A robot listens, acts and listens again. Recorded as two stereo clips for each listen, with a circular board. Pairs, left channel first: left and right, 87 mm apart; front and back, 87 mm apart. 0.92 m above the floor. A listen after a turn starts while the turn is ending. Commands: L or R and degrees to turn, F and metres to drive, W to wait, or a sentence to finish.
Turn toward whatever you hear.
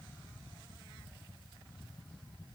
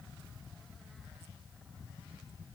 W
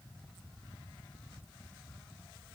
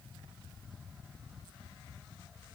W
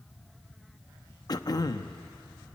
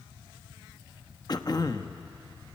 L45
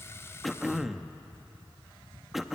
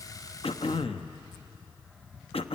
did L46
Found it: throat clearing, straight ahead.